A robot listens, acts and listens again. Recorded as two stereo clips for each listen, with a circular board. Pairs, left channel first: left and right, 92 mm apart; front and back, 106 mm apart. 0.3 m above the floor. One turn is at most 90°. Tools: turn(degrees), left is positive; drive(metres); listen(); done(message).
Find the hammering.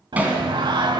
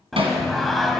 turn(degrees=-90)
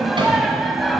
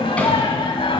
turn(degrees=-70)
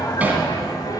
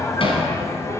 turn(degrees=-20)
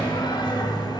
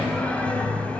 listen()
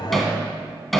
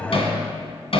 done("Facing the hammering.")